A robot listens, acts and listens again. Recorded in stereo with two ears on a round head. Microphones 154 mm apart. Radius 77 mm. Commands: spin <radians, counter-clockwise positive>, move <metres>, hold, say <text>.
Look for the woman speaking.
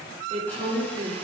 spin -0.70
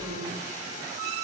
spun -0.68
hold
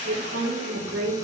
spin -1.66
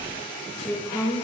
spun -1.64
say Facing the woman speaking, over 4 m away.